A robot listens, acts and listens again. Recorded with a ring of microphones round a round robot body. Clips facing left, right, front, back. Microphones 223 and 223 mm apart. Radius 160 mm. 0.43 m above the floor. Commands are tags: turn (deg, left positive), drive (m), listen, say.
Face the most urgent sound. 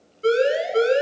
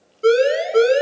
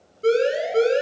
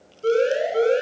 <turn deg="-55"/>
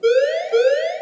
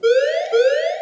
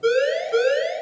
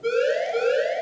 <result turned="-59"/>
<say>Found it: a siren, straight ahead.</say>